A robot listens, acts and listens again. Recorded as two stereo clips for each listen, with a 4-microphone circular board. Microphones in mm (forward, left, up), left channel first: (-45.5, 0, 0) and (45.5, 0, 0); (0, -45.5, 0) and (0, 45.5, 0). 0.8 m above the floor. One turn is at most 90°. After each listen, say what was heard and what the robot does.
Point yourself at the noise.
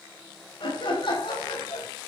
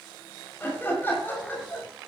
The laughter: 155° right. Turn 90° right.
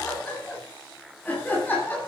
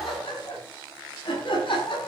The laughter is now 110° right. Turn 90° right.
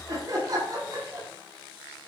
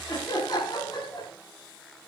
The laughter is now 50° right. Turn 50° right.
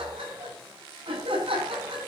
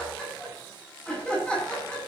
The laughter is now 10° right. Turn 10° right.
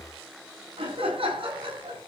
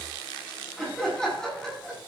Facing the laughter.